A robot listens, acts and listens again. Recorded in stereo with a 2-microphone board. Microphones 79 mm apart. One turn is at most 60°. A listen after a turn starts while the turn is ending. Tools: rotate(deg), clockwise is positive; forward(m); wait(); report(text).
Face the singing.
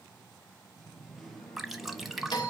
rotate(-30)
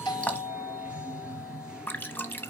rotate(10)
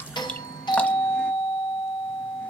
report("Facing the singing.")